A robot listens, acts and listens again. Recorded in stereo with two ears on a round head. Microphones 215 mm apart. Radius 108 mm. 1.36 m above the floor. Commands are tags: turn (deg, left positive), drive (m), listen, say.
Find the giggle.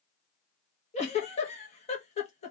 <turn deg="25"/>
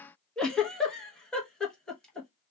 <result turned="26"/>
<say>Found it: a giggle, straight ahead.</say>